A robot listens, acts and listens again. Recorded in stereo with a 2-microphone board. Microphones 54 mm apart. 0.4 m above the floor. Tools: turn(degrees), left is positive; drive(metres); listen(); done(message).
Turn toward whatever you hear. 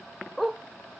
turn(degrees=30)
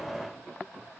listen()
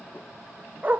turn(degrees=-35)
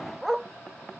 done("Found it: a dog barking, straight ahead.")